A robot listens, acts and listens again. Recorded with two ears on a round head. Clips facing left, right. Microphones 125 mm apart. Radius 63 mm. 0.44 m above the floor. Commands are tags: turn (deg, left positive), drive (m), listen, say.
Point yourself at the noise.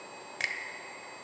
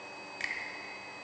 <turn deg="60"/>
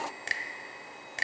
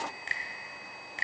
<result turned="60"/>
<turn deg="45"/>
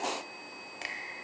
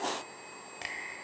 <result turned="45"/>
<say>Facing the finger snap.</say>